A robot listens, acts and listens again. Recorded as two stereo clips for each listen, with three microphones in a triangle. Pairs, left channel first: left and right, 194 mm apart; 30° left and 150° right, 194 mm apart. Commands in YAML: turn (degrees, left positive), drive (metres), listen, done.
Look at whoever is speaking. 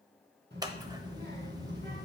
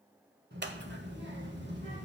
turn: -120
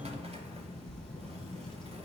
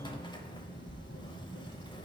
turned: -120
done: "Facing the child speaking."